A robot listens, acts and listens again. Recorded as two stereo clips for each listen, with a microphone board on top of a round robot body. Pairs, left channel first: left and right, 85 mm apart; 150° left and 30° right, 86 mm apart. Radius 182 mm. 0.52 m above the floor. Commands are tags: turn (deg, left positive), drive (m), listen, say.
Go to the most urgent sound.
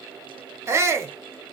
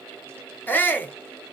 <turn deg="-145"/>
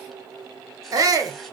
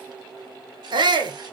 <turn deg="-45"/>
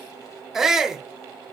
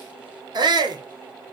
<drive m="1.0"/>
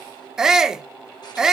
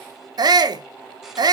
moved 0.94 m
<drive m="1.0"/>
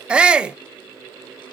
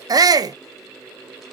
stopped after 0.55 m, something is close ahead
<turn deg="-15"/>
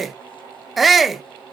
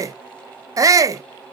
<say>Arrived at the shout, straight ahead.</say>